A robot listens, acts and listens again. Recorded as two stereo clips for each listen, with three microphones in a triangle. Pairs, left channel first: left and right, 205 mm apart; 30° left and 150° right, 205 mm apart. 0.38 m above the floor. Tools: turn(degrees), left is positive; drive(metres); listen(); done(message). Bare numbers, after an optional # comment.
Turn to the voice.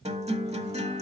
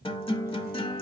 listen()
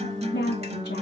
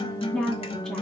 # The woman speaking: 115° left.
turn(115)
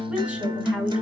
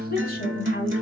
done("Found it: a woman speaking, straight ahead.")